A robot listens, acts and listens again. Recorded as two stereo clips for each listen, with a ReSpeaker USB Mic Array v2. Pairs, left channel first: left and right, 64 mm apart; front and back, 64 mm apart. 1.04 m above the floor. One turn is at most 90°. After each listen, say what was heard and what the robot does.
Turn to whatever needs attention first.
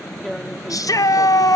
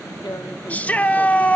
The shout: 65° left. Turn 65° left.
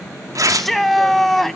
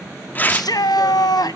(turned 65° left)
Facing the shout.